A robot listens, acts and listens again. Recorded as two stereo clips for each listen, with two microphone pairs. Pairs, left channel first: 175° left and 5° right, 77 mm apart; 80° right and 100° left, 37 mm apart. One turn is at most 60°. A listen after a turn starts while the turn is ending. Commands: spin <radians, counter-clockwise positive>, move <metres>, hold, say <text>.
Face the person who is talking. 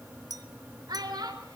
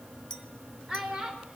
spin 0.52
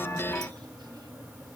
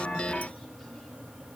hold
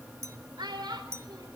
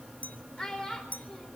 say Found it: a child speaking, straight ahead.